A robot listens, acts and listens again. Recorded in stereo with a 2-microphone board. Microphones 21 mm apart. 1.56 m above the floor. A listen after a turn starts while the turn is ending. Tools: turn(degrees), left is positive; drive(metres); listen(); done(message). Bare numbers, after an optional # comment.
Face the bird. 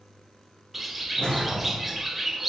turn(-30)
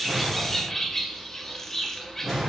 # So it is at 20° left.
turn(20)
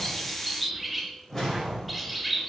done("Facing the bird.")